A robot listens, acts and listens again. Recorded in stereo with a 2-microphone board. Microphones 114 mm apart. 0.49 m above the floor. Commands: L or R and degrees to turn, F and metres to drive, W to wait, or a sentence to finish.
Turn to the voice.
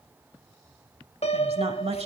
R65
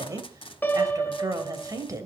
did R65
R35
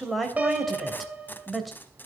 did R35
Found it: a woman speaking, straight ahead.